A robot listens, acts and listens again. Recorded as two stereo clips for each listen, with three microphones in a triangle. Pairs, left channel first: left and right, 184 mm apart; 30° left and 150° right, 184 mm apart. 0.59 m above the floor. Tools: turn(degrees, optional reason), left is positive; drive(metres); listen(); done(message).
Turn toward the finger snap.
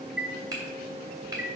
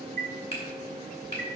turn(degrees=-25, reason="The finger snap: 25° right.")
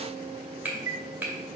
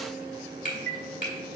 turn(degrees=-10, reason="The finger snap is now 10° right.")
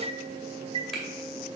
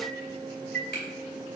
listen()
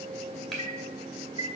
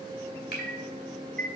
done("Found it: a finger snap, straight ahead, 2 to 4 m away.")